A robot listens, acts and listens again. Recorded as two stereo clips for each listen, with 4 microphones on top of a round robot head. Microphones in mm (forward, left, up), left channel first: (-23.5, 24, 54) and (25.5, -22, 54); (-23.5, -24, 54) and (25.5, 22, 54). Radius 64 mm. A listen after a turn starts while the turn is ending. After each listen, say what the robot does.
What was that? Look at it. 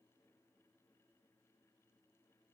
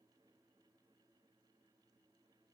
Keep listening.
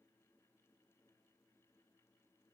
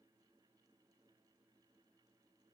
Keep listening.
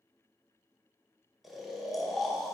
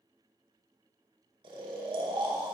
Turn 45° left.
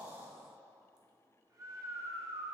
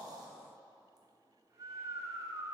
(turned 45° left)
Found it: snoring, straight ahead, 1 to 2 m away.